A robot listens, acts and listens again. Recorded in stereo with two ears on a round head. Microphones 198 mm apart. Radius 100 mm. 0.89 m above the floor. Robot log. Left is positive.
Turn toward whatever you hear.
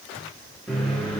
cmd yaw +30
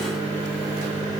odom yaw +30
note: So it is at 25° right.
cmd yaw -25
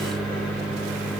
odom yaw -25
end: Found it: a microwave, straight ahead.